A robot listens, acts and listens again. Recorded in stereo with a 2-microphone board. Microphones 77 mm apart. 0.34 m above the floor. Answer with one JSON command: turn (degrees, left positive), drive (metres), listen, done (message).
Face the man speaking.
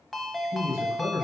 {"turn": 40}
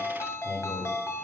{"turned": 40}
{"listen": true}
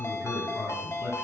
{"turn": 25}
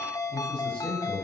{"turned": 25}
{"turn": 20}
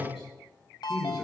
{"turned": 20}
{"done": "Found it: a man speaking, straight ahead."}